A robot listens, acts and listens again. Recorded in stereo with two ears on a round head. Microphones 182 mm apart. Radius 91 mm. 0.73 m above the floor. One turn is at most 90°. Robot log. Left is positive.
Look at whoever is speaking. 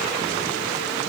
cmd idle
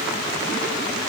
cmd idle
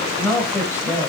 cmd yaw +30
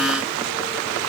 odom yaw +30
cmd idle
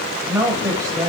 note: So it is at 15° right.
cmd yaw -15
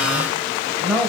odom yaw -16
end: Facing the man speaking.